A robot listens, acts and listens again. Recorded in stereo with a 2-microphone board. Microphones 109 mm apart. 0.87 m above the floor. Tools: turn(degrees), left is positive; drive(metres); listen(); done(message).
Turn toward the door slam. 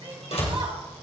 turn(degrees=75)
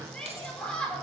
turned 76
listen()
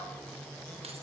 done("I heard a door slam, but can't make it out now. It was about 5° right or 30° left.")